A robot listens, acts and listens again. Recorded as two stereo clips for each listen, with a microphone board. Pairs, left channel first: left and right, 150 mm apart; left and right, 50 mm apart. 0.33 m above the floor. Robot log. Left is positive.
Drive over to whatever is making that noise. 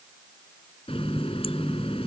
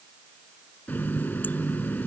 note: The running tap: about 40° left or 140° left.
cmd yaw +40
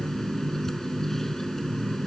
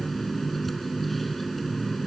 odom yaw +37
cmd fwd 1.0
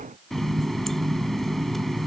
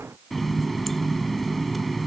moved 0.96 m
cmd fwd 1.0
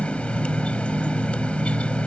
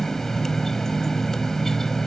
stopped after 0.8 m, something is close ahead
note: The running tap is now 10° left.
cmd yaw +10
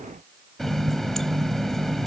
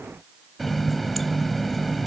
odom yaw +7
end: Arrived at the running tap, straight ahead.